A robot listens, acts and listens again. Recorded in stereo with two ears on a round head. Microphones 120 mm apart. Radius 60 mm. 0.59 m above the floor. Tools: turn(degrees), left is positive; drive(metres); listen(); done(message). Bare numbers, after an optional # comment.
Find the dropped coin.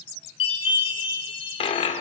# The dropped coin: about 45° left or 135° left.
turn(45)
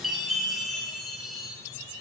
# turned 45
listen()
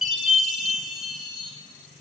done("I heard a dropped coin, but can't make it out now. It was about straight ahead or 90° left.")